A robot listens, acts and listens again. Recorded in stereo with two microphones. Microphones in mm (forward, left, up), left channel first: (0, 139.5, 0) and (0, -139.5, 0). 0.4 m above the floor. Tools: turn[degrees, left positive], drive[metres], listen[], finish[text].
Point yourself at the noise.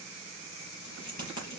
Action: turn[90]
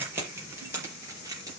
Thought: So it is at 15° right.
Action: turn[-15]
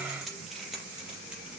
Action: finish[Facing the keys jangling.]